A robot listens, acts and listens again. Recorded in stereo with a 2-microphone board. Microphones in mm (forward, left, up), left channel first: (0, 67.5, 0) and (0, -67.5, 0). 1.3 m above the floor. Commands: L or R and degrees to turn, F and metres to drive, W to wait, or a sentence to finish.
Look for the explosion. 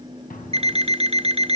L90
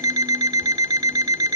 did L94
Facing where the explosion came from. I can't hear it now.